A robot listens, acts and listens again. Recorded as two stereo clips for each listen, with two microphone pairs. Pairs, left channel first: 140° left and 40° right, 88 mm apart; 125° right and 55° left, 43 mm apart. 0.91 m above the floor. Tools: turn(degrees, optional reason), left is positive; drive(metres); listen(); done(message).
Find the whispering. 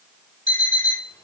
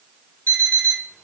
listen()
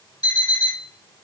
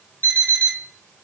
listen()
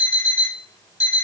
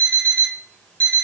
done("I can't make out whispering to turn to.")